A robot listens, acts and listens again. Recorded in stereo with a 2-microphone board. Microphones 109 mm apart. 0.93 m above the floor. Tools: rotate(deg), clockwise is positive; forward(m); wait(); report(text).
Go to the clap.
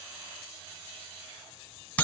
wait()
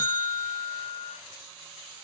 wait()
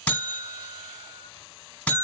report("I can't make out a clap to turn to.")